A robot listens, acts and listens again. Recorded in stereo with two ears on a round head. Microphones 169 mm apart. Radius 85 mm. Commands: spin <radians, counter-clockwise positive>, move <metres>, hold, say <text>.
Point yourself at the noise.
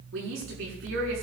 spin -1.22
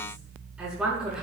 say Found it: a woman speaking, straight ahead, over 4 m away.